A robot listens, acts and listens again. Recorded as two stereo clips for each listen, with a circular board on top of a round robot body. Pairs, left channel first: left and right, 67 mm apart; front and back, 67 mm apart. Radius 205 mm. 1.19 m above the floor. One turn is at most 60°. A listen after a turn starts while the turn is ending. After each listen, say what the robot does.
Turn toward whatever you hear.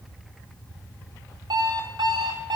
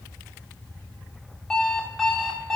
Turn 60° right.
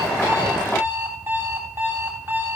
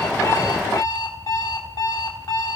Turn 35° right.
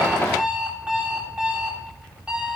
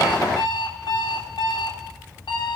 Turn 15° right.
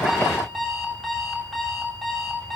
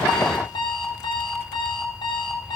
Facing the alarm clock.